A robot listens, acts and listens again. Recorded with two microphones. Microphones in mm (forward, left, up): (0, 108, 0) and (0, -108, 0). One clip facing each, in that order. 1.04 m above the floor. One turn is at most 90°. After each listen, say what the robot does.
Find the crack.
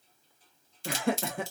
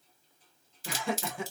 Turn 30° right.
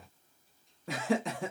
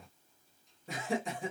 Keep listening.
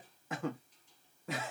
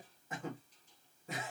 I heard a crack, but can't make it out now. It was about 25° left or 145° right.